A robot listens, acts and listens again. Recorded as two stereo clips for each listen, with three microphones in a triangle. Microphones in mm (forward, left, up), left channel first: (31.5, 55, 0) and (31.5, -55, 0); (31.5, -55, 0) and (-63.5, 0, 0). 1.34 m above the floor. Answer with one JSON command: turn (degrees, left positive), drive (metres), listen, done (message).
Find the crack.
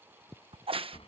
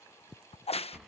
{"turn": -55}
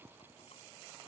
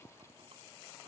{"done": "Facing where the crack came from. I can't hear it now."}